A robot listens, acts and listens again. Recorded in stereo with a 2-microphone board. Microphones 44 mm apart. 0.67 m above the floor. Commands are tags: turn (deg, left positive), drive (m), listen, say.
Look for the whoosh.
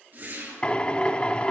<turn deg="-50"/>
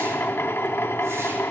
<listen/>
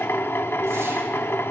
<listen/>
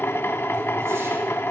<say>I heard a whoosh, but can't make it out now. It was about straight ahead or 80° right.</say>